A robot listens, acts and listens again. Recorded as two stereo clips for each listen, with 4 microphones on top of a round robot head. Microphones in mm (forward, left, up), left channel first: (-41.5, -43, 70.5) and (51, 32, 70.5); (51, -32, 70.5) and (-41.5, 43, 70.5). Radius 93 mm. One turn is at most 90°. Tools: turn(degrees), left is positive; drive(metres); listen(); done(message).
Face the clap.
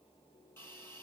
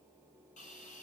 listen()
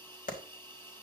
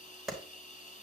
turn(degrees=-90)
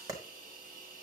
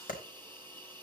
turn(degrees=-25)
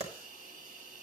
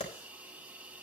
done("Facing the clap, 2 to 4 m away.")